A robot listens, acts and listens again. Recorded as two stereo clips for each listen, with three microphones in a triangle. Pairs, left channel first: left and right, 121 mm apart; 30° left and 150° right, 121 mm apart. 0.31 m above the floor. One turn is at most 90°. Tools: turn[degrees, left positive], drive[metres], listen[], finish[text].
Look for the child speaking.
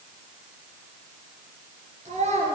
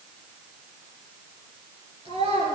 Thought: The child speaking: 115° right.
Action: turn[-90]
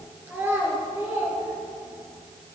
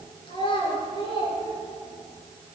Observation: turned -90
Thought: The child speaking is now 20° right.
Action: turn[-20]
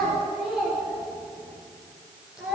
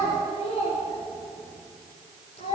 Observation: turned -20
Action: finish[Found it: a child speaking, straight ahead.]